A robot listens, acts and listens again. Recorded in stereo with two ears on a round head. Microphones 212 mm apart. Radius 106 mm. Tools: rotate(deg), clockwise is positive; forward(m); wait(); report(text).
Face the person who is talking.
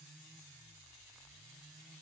wait()
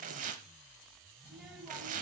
rotate(-30)
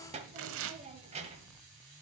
rotate(30)
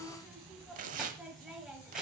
report("Found it: a child speaking, straight ahead, 1 to 2 m away.")